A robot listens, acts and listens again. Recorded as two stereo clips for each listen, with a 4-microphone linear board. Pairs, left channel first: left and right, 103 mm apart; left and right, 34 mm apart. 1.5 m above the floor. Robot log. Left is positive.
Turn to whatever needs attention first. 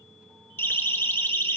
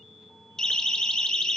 note: The siren: about 20° left or 160° left.
cmd yaw +20
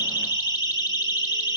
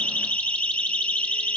note: So it is at 135° left.
cmd yaw +135
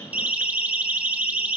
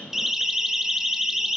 note: The siren is now 15° right.
cmd yaw -15
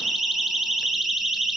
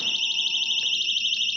end: Found it: a siren, straight ahead.